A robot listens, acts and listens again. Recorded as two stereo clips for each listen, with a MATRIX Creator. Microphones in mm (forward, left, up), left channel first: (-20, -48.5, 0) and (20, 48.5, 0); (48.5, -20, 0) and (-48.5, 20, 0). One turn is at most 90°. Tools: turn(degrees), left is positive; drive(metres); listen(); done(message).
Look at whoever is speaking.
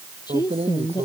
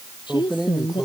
turn(degrees=-65)
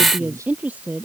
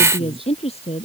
turn(degrees=-10)
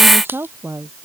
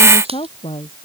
done("Found it: a woman speaking, straight ahead.")